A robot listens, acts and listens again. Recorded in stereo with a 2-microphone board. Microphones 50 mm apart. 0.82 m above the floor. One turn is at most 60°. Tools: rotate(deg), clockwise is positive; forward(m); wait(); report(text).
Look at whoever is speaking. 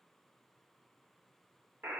wait()
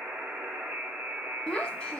rotate(-20)
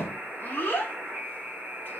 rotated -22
rotate(-60)
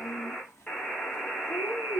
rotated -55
rotate(-60)
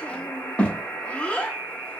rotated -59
rotate(-25)
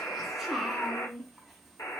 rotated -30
report("Found it: a child speaking, straight ahead, under 1 m away.")